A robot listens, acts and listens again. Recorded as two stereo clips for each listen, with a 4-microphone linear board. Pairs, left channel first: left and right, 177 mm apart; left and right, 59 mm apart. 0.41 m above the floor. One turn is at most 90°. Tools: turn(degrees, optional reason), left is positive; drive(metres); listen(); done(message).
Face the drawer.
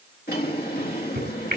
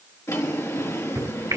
turn(degrees=65, reason="The drawer: about 65° left or 115° left.")
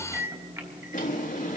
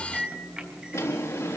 turn(degrees=50, reason="So it is at 50° left.")
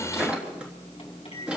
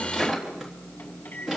done("Facing the drawer, 2 to 4 m away.")